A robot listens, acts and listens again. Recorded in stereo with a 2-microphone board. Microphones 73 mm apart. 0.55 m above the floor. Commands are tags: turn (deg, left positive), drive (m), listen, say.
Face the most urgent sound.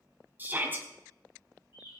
<turn deg="-25"/>
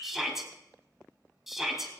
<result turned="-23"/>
<say>Facing the shout, 2 to 4 m away.</say>